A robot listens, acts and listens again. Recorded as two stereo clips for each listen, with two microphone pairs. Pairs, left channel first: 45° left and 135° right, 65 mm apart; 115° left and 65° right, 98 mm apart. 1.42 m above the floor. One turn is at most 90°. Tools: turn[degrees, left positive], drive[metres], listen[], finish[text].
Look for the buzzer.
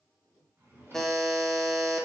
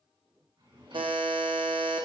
Thought: The buzzer: 40° right.
Action: turn[-40]
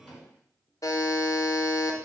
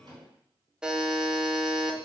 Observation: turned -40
Thought: The buzzer is now 15° left.
Action: turn[15]
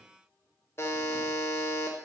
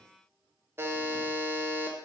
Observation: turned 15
Action: finish[Facing the buzzer.]